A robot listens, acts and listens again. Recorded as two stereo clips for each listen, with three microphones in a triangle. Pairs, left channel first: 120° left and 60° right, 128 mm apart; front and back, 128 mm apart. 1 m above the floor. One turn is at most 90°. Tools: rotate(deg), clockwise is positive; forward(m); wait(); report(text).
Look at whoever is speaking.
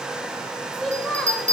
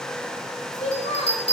rotate(-30)
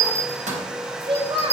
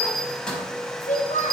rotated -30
rotate(10)
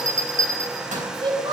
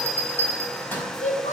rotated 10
report("Found it: a child speaking, straight ahead, 2 to 4 m away.")